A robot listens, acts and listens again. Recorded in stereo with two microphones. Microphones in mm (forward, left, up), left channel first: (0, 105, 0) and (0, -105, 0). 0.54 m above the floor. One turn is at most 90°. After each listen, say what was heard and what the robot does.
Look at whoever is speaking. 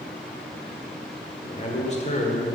The man speaking: about 35° left or 145° left. Turn 35° left.
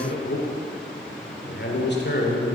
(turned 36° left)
So it is at 100° left. Turn 90° left.
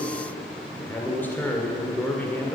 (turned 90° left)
The man speaking is now 10° left. Turn 10° left.
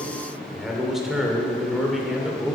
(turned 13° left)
Facing the man speaking.